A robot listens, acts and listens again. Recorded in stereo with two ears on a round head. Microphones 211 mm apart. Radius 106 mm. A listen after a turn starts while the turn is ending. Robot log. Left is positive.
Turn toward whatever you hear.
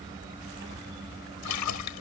cmd yaw +90
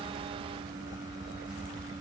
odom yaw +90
end: I heard a splash from this way, but can't make it out now.